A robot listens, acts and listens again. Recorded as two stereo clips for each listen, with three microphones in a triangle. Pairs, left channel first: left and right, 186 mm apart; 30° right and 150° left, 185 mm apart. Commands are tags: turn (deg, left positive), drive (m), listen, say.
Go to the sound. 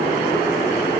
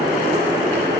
<listen/>
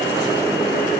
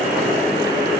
<listen/>
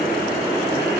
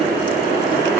<say>I can't make out anything to turn to.</say>